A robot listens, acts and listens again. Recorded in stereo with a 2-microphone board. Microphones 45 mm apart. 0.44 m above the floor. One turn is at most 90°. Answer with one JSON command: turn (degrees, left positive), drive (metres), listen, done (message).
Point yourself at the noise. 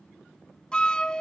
{"turn": 20}
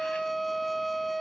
{"done": "Facing the flute."}